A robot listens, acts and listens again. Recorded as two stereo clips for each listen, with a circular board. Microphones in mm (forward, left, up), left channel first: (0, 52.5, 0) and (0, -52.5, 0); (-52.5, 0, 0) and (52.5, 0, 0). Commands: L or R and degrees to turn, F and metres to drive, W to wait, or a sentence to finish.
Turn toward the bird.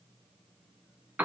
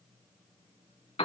W
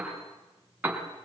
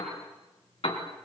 W
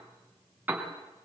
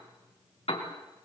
I can't make out a bird, only a piano.